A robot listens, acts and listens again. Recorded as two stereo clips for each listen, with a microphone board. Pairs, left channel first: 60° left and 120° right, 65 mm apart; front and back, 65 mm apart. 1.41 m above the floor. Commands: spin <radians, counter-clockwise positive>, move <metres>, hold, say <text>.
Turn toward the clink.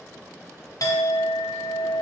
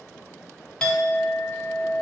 spin 1.22
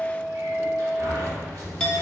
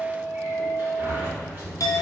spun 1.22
spin -0.26
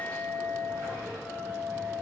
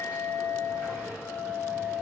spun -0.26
say Found it: a clink, straight ahead.